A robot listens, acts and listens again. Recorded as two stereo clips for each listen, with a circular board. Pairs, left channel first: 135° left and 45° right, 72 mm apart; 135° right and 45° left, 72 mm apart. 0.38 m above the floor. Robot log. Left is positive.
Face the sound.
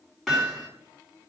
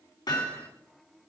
note: The hammering: 135° right.
cmd yaw -135
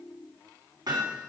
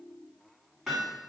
note: The hammering is now 40° right.
cmd yaw -40
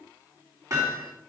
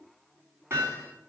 note: The hammering is now 10° right.
cmd yaw -10
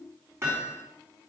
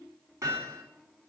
end: Found it: hammering, straight ahead, 2 to 4 m away.